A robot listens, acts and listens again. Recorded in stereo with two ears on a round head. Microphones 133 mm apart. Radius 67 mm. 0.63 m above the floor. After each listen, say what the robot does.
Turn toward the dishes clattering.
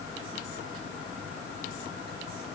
Keep listening.
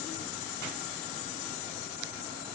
Keep listening.
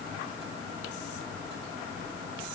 I can't make out dishes clattering.